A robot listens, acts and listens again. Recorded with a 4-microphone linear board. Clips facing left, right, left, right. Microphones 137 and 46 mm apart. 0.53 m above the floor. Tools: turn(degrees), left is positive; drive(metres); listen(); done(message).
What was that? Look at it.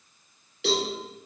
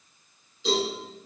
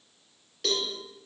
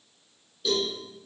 turn(degrees=90)
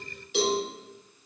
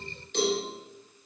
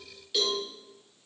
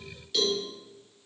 done("Facing the cowbell.")